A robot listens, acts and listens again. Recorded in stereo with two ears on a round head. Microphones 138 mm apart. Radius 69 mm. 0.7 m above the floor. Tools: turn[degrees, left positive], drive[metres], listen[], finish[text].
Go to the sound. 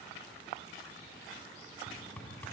Action: turn[30]
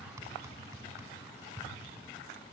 Thought: So it is at 20° right.
Action: turn[-20]
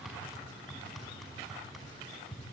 Action: drive[1.0]
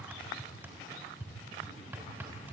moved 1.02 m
Thought: The hammering is now 15° right.
Action: turn[-15]
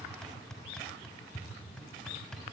Action: drive[1.0]
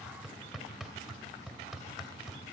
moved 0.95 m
Action: drive[1.0]
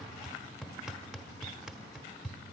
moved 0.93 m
Action: drive[1.0]
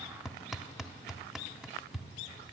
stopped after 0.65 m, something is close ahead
Action: finish[Arrived at the hammering, straight ahead.]